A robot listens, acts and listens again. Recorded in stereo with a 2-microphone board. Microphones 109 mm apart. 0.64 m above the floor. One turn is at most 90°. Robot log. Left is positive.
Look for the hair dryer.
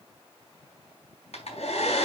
cmd yaw +90
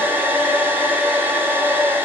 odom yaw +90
note: So it is at 15° right.
cmd yaw -15
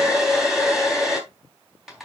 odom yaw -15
end: Facing the hair dryer.